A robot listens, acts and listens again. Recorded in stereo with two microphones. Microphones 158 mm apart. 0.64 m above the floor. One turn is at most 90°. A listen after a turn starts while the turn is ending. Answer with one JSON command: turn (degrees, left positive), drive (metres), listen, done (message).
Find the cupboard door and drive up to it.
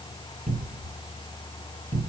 {"turn": -75}
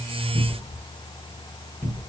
{"drive": 1.0}
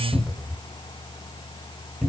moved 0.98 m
{"drive": 1.0}
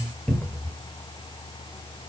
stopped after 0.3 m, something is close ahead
{"done": "I am next to the cupboard door."}